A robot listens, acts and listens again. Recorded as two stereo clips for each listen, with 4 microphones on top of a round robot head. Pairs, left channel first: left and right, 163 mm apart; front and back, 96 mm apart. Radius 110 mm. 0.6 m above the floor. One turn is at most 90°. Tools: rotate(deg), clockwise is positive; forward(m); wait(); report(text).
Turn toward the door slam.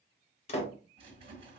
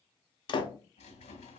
rotate(-35)
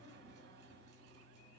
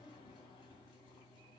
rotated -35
report("Facing where the door slam came from. I can't hear it now.")